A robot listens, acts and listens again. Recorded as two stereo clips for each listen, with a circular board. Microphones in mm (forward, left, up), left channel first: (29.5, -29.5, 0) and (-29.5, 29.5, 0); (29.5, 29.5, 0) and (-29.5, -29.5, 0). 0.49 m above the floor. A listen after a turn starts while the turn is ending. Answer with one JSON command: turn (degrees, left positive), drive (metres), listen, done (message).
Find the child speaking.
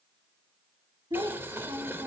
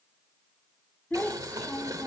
{"turn": 100}
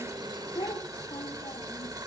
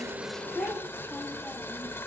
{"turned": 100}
{"turn": -10}
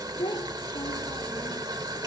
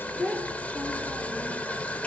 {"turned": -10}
{"turn": -30}
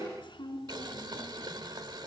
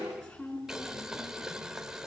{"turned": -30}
{"turn": -20}
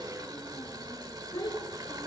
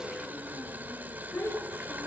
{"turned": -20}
{"done": "Found it: a child speaking, straight ahead, 2 to 4 m away."}